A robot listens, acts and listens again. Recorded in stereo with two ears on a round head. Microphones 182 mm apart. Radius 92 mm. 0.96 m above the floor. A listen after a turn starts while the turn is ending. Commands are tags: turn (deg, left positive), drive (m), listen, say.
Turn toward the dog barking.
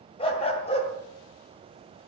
<turn deg="30"/>
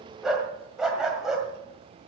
<say>Facing the dog barking, 2 to 4 m away.</say>